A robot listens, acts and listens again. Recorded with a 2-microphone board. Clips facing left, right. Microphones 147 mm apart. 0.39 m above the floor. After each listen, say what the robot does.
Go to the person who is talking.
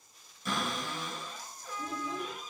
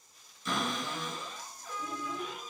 Turn 25° left.
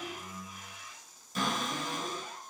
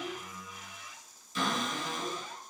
Turn 125° left.
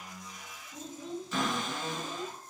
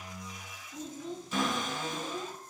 Turn 35° left.
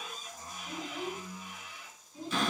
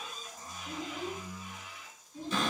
Turn 10° left.
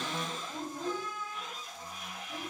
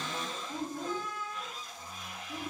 Drive 1.0 m forward.
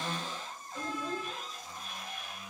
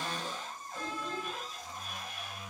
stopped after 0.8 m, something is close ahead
Turn 10° left.
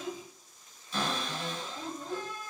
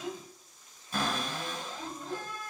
Arrived at the child speaking, straight ahead.